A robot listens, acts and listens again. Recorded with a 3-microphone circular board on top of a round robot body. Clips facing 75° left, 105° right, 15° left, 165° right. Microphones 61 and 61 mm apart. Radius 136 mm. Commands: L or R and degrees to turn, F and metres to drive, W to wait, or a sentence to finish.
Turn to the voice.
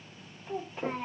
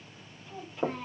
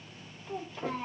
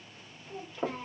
L30
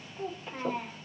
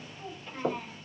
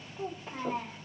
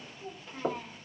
Found it: a child speaking, straight ahead.